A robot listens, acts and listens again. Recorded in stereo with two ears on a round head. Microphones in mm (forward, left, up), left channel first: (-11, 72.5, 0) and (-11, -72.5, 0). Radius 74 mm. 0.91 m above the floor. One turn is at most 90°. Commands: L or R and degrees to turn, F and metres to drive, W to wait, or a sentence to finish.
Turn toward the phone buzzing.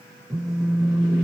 R20
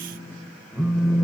Facing the phone buzzing, 1 to 2 m away.